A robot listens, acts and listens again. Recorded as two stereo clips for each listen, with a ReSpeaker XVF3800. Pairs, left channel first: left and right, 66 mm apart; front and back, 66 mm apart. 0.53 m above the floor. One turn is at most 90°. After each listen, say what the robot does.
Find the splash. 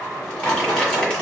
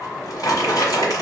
Keep listening.
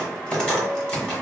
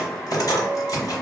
Keep listening.
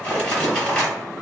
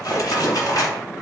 I can't make out a splash to turn to.